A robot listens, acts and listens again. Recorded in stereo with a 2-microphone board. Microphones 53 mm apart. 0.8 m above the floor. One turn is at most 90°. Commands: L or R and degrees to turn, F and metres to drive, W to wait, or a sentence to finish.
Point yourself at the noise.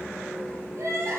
R60
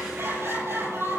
R60
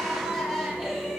R10
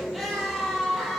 Found it: crying, straight ahead, over 4 m away.